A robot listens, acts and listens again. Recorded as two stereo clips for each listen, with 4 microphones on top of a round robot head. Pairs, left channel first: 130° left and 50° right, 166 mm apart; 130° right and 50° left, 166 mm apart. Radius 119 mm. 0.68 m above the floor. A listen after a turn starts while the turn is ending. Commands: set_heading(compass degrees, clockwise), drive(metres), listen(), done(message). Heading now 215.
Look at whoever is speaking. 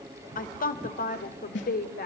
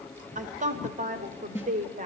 set_heading(115)
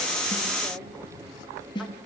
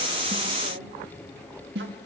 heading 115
set_heading(75)
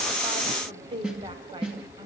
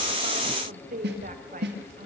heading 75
set_heading(60)
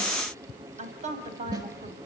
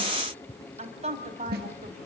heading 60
done("Facing the woman speaking.")